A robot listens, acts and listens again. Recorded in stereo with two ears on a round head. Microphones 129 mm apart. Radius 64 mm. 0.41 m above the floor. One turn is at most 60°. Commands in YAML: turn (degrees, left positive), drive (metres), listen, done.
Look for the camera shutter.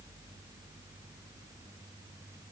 listen: true
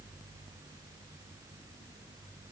listen: true
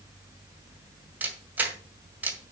turn: -30
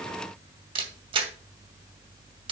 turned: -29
turn: -60
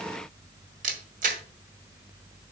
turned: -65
turn: -60
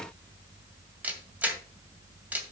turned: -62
turn: -10
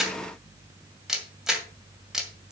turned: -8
done: "Facing the camera shutter."